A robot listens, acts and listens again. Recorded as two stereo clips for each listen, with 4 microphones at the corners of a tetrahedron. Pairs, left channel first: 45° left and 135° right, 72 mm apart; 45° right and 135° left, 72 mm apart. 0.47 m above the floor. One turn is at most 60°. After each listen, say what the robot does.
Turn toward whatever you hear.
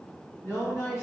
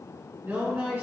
Turn 60° left.
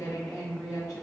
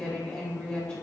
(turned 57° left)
Turn 25° left.
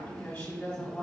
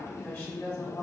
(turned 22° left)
Facing the woman speaking.